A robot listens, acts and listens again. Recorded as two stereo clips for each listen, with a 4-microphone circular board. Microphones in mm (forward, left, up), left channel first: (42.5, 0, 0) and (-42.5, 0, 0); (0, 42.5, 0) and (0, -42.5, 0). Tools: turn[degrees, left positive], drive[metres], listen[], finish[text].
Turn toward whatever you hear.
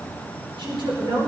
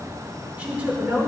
Thought: The woman speaking: 165° right.
Action: turn[-165]
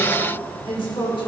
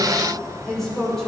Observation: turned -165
Action: finish[Found it: a woman speaking, straight ahead.]